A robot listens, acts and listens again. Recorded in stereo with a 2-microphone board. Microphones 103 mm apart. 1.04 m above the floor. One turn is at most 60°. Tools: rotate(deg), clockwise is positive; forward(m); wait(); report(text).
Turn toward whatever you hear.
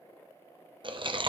rotate(50)
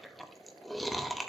report("Facing the chewing.")